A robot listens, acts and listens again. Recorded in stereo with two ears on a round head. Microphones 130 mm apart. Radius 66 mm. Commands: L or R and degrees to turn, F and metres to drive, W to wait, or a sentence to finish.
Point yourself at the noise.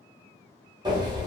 R30
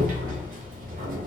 R120
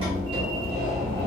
R35
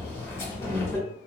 L15
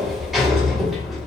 Facing the sliding door, under 1 m away.